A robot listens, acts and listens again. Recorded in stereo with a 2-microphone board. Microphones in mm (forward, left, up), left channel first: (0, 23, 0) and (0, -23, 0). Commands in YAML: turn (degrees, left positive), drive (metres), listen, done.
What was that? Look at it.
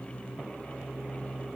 listen: true
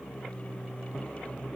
listen: true
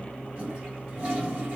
turn: -30
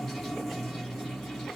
done: "Found it: a toilet flushing, straight ahead."